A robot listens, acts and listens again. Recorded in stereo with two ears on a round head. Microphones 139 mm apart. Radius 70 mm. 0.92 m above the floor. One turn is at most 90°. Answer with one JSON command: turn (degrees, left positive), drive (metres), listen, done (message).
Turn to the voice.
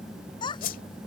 {"turn": 30}
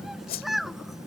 {"done": "Found it: a child speaking, straight ahead."}